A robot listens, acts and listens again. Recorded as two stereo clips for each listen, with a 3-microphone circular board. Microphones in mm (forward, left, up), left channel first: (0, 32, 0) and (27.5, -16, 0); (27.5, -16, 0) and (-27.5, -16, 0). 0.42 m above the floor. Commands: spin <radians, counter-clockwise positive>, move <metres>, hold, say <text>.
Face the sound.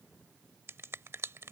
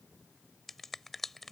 spin -1.48
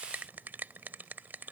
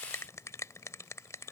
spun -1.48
spin -0.17
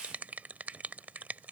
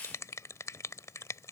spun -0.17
say Facing the finger snap.